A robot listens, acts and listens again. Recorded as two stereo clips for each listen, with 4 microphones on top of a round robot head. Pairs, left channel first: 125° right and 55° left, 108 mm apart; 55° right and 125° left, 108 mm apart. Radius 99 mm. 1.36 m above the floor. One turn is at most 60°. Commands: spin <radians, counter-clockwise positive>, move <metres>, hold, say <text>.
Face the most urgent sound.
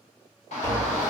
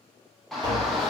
spin -1.05
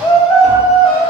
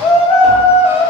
spin -1.05
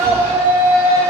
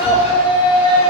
spin -0.35
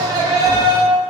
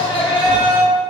say Found it: a shout, straight ahead.